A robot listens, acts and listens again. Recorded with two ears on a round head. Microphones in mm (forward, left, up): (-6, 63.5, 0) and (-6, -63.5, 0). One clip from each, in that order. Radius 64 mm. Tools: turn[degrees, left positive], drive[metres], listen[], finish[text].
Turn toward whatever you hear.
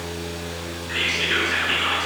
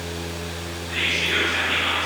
Thought: The whispering: about 50° left or 130° left.
Action: turn[50]
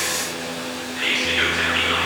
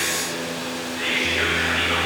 Thought: So it is at 75° left.
Action: turn[75]
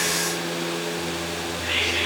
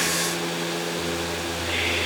Action: listen[]
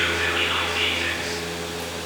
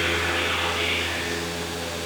Thought: The whispering is now 30° left.
Action: turn[30]
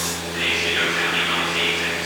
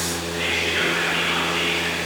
Thought: The whispering is now 10° left.
Action: turn[10]
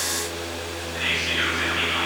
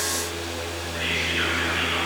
Action: finish[Found it: whispering, straight ahead, over 4 m away.]